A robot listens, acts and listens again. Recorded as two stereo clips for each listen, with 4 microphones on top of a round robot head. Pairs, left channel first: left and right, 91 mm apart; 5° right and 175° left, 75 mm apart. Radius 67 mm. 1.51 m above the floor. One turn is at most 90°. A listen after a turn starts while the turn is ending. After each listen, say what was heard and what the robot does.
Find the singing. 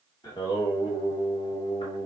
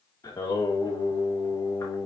The singing: 45° left. Turn 45° left.
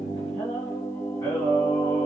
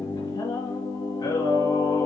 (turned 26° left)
The singing is now 30° left. Turn 30° left.
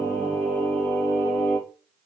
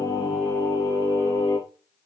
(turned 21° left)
The singing is now 20° left. Turn 20° left.
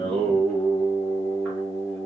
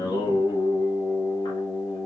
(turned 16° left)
The singing is now 10° left. Turn 10° left.
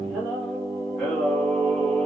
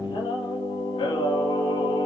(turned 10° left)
Found it: singing, straight ahead.